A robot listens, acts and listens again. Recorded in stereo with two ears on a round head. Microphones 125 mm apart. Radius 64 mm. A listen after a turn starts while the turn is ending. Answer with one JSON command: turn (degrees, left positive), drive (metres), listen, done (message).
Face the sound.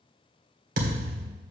{"turn": -60}
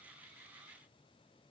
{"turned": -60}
{"listen": true}
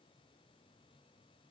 {"done": "I heard a thud, but can't make it out now. It was about straight ahead or 60° right."}